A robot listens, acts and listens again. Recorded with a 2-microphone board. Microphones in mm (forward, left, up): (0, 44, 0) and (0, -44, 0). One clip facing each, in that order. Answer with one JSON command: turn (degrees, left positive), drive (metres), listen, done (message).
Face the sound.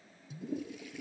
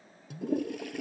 {"turn": -65}
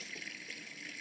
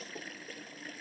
{"turn": -45}
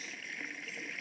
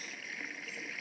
{"done": "Found it: a toilet flushing, straight ahead."}